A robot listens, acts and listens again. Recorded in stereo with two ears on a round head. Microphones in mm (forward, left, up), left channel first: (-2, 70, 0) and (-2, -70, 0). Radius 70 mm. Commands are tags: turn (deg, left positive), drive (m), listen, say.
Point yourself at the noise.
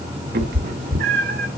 <turn deg="-60"/>
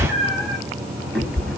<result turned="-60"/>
<say>Found it: a cat meowing, straight ahead.</say>